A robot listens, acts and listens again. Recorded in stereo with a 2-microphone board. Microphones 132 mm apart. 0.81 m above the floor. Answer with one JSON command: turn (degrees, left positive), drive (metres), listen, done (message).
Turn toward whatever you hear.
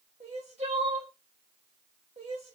{"turn": -50}
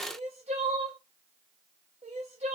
{"turn": -70}
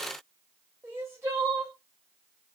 {"turn": -20}
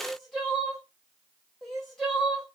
{"done": "Facing the crying."}